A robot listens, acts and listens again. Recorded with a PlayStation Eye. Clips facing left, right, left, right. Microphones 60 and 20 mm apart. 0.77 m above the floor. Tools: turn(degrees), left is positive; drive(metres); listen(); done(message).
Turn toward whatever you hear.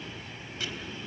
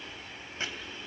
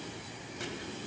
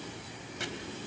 turn(degrees=-35)
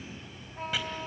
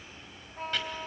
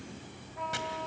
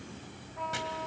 done("Found it: chopping, straight ahead.")